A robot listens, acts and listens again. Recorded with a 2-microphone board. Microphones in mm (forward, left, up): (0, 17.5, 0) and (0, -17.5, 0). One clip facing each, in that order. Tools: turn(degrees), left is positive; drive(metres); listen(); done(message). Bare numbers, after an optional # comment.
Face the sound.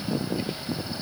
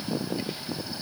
listen()
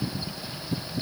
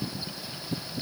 listen()
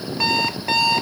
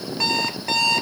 turn(30)
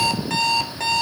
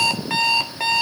# So it is at 15° right.
turn(-15)
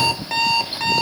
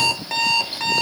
done("Found it: an alarm clock, straight ahead, 1 to 2 m away.")